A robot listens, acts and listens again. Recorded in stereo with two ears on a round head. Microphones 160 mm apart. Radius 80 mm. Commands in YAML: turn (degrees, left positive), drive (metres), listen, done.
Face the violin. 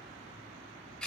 listen: true
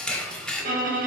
turn: -50
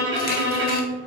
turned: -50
turn: -75
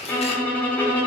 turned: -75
turn: 10
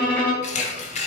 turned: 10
done: "Facing the violin, under 1 m away."